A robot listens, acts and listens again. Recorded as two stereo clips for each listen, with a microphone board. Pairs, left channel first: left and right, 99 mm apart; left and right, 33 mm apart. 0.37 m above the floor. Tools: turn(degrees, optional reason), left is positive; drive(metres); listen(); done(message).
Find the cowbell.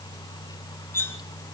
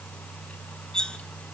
listen()
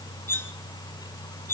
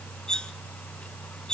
listen()
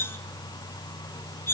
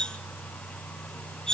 done("I can't make out a cowbell, only cutlery clinking.")